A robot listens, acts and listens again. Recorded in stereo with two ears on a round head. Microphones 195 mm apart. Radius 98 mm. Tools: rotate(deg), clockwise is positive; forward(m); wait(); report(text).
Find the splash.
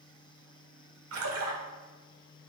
rotate(70)
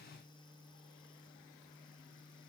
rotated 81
wait()
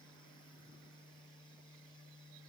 report("I heard a splash, but can't make it out now. It was about 10° left or 30° right.")